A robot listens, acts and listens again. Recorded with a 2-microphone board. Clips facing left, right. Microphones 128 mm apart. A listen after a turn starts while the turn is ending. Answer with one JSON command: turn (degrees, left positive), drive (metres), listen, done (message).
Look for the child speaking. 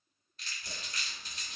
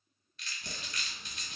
{"listen": true}
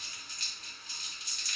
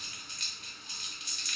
{"listen": true}
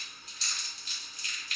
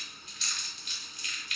{"done": "I can't make out a child speaking, only a running tap and crumpling."}